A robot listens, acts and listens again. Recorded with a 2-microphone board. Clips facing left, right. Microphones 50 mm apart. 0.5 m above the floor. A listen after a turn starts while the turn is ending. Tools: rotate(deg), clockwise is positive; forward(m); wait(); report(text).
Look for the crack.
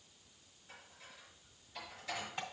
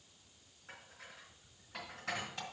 wait()
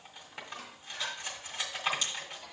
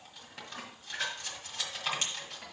rotate(50)
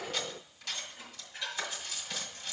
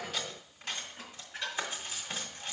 wait()
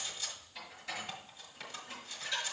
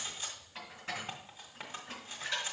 report("I heard a crack, but can't make it out now. It was about straight ahead or 80° right.")